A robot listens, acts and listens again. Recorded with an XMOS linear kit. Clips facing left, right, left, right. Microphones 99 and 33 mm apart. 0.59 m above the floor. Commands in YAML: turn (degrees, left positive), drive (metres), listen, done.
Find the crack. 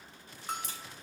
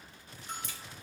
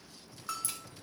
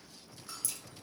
turn: 35
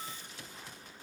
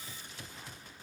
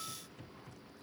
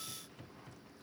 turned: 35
listen: true
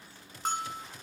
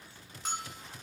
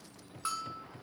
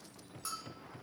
done: "I heard a crack, but can't make it out now. It was about straight ahead or 110° left."